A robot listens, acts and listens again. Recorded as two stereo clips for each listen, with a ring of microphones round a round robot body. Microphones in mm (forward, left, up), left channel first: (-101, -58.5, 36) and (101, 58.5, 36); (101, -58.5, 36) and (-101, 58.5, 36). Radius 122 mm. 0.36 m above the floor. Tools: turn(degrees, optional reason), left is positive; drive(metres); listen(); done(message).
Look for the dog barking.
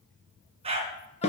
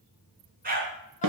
turn(degrees=95, reason="The dog barking: 95° left.")
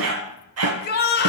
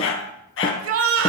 turn(degrees=10, reason="The dog barking is now 10° left.")
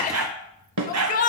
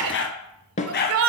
turn(degrees=20, reason="The dog barking is now 20° left.")
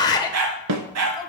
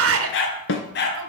turn(degrees=20, reason="The dog barking is now 20° left.")
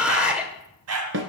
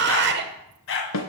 turn(degrees=10, reason="The dog barking is now 10° left.")
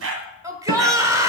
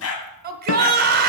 done("Facing the dog barking, 1 to 2 m away.")